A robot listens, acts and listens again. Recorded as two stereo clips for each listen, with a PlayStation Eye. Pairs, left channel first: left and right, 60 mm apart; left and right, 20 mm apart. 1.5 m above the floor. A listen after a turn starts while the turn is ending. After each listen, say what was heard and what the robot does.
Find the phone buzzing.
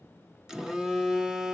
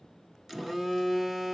Turn 30° right.
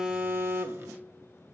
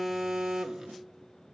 So it is at 140° right. Turn 140° right.
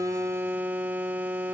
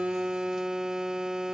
The phone buzzing is now 35° right. Turn 35° right.
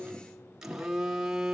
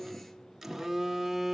The phone buzzing is now 10° right. Turn 10° right.
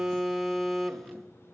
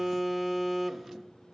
Facing the phone buzzing.